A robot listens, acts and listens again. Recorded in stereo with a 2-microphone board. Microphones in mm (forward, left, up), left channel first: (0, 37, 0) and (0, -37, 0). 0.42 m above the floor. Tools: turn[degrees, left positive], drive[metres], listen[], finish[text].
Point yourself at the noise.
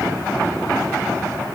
Action: listen[]
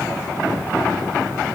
Action: listen[]
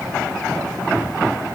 Action: finish[I can't make out anything.]